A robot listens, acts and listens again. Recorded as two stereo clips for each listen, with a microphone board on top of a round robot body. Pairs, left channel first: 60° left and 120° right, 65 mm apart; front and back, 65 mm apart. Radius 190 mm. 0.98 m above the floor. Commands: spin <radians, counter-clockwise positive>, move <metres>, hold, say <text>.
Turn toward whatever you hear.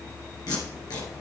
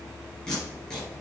spin 1.40
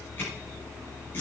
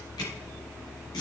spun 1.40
say Found it: tape being pulled, straight ahead, 2 to 4 m away.